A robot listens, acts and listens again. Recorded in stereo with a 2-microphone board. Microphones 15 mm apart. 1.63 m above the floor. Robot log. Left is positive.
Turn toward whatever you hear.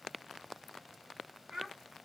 note: The child speaking: about 60° right or 120° right.
cmd yaw -60
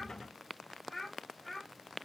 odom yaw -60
note: So it is at 10° left.
cmd yaw +10
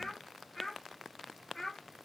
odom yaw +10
note: The child speaking is now 10° left.
cmd yaw +10
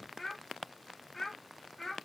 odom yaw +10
end: Facing the child speaking.